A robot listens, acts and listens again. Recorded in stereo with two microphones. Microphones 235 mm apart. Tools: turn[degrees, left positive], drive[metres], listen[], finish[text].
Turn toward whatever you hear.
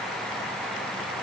Action: listen[]
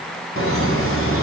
Thought: The laughter: about 65° right or 115° right.
Action: turn[-65]
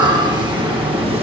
Thought: So it is at 25° right.
Action: turn[-25]
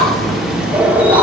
Action: finish[Found it: laughter, straight ahead.]